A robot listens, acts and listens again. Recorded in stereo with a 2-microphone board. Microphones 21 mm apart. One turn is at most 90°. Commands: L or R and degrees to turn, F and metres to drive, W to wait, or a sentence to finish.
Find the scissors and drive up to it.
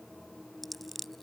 L30
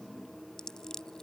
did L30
L90
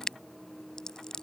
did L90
L35
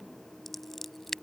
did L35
F1.0
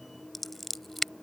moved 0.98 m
F1.0
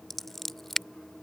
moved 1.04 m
L15
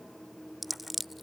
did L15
F1.0
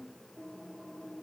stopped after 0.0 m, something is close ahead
W
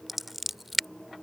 R10
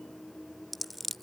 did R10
Arrived at the scissors, straight ahead.